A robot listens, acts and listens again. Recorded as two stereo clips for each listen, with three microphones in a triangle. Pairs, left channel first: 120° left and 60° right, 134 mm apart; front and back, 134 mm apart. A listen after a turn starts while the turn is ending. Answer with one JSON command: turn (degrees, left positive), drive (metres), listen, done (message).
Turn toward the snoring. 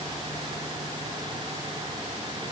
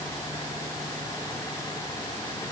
{"listen": true}
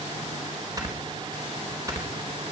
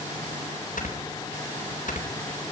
{"done": "Facing the snoring."}